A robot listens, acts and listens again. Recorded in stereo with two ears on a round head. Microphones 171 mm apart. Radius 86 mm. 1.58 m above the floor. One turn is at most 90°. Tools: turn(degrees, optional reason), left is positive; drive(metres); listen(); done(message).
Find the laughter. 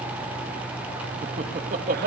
turn(degrees=-45, reason="The laughter: about 45° right or 135° right.")
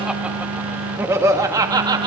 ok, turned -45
turn(degrees=-25, reason="So it is at 25° right.")
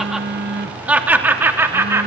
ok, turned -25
turn(degrees=-15, reason="The laughter is now 15° right.")
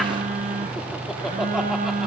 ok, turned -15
listen()
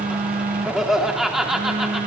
done("Found it: laughter, straight ahead.")